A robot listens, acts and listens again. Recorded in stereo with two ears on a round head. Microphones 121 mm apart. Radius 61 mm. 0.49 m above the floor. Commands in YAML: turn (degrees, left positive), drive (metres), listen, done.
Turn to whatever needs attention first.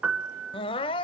turn: 40
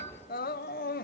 turn: 105
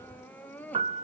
turn: 10
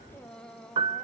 done: "Found it: crying, straight ahead."